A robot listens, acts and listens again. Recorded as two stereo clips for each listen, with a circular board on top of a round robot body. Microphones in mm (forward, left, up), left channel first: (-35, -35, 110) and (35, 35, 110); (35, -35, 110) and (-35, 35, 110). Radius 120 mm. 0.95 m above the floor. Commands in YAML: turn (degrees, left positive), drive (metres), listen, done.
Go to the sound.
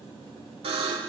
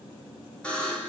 turn: 35
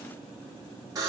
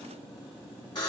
drive: 1.0
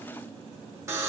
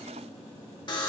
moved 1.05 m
turn: -10
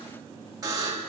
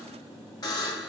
drive: 1.0
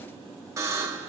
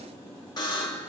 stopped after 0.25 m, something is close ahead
turn: -10
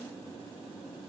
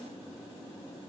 done: "I am next to the buzzer."